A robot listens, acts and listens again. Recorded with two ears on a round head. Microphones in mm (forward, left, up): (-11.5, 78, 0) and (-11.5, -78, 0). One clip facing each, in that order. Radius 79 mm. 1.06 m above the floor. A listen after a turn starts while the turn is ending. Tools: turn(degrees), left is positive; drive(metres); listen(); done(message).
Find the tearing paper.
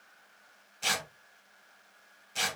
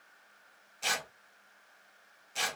turn(degrees=30)
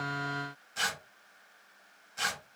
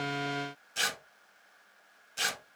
turn(degrees=-30)
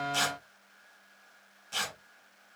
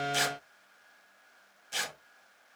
turn(degrees=-15)
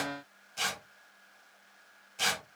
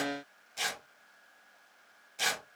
done("Facing the tearing paper.")